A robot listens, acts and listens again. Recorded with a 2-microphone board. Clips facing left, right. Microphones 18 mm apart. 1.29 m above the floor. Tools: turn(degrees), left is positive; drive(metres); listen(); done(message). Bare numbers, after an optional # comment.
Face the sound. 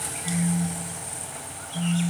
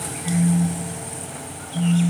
# The phone buzzing: about 70° left or 110° left.
turn(70)
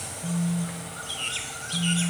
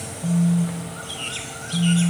done("Facing the phone buzzing.")